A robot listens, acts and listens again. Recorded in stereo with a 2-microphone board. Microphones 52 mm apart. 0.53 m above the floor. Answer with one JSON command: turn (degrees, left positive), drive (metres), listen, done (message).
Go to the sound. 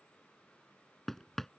{"turn": 30}
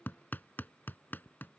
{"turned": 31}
{"turn": 145}
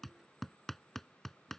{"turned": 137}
{"drive": 1.0}
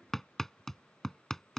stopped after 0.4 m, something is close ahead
{"turn": 10}
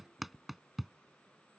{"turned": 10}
{"done": "Something is in my way. I am facing the hammering but have not reached it."}